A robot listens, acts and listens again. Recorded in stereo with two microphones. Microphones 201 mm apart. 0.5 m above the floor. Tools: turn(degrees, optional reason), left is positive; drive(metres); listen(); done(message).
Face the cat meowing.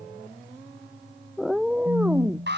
turn(degrees=-30)
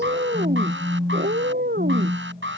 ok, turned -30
turn(degrees=-125, reason="So it is at 125° right.")
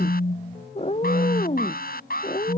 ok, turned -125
turn(degrees=35, reason="The cat meowing is now 35° left.")
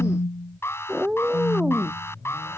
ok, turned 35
done("Found it: a cat meowing, straight ahead.")